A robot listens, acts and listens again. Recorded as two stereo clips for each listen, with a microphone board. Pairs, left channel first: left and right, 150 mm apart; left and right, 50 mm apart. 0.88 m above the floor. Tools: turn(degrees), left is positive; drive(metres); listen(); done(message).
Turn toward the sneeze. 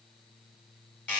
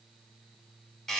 listen()
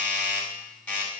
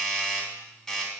listen()
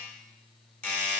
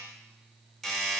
done("I can't make out a sneeze, only a doorbell.")